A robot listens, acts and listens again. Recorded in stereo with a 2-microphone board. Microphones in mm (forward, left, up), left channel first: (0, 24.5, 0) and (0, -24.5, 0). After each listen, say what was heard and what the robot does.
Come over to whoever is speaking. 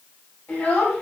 The child speaking: about 35° left or 145° left. Turn 35° left.
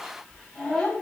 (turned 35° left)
Drive 1.0 m forward.
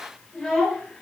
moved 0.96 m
Drive 1.0 m forward.
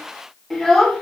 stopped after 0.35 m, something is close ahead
I am next to the child speaking.